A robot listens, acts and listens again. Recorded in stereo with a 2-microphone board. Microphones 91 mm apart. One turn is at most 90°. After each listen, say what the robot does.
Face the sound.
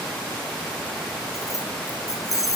Turn 40° left.
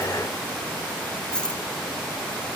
Turn 10° left.
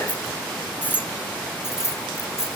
Turn 35° left.
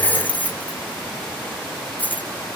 Turn 20° left.
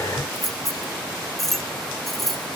Found it: keys jangling, straight ahead.